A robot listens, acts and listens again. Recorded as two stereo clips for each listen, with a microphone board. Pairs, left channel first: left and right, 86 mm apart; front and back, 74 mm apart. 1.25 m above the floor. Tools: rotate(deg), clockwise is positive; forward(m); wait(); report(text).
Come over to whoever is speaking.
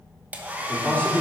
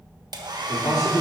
rotate(-20)
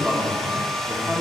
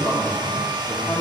forward(1.0)
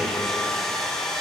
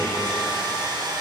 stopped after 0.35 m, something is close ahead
wait()
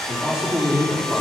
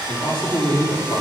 rotate(10)
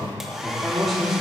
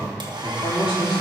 report("Something is in my way. I am facing the man speaking but have not reached it.")